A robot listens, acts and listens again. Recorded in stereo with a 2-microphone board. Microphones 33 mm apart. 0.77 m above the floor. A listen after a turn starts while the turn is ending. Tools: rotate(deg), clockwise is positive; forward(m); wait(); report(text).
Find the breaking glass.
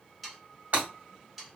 rotate(55)
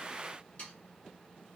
wait()
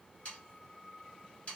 report("I heard breaking glass, but can't make it out now. It was about straight ahead or 70° right.")